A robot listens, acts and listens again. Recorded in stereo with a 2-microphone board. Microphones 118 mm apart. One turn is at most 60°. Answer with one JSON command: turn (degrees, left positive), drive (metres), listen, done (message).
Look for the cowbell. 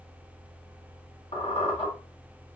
{"listen": true}
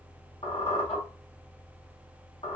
{"listen": true}
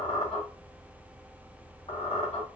{"done": "I can't make out a cowbell, only a squeak."}